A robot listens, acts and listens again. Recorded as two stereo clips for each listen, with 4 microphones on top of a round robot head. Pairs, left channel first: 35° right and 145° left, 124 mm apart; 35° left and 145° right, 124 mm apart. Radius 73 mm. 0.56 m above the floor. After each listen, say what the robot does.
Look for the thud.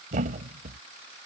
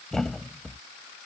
Turn 120° left.
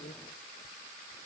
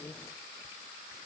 Facing where the thud came from. I can't hear it now.